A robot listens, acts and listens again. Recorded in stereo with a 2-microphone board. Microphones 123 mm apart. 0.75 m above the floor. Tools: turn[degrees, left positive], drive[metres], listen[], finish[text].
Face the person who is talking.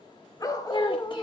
Thought: The child speaking: about 45° left or 135° left.
Action: turn[45]
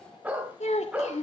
Thought: So it is at 90° left.
Action: turn[90]
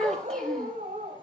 Action: finish[Found it: a child speaking, straight ahead, 1 to 2 m away.]